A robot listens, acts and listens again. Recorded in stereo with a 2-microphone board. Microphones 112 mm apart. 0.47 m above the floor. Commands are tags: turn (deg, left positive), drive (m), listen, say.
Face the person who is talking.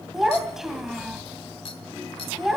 <turn deg="-30"/>
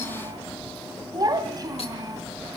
<turn deg="-145"/>
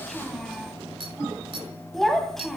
<say>Facing the child speaking.</say>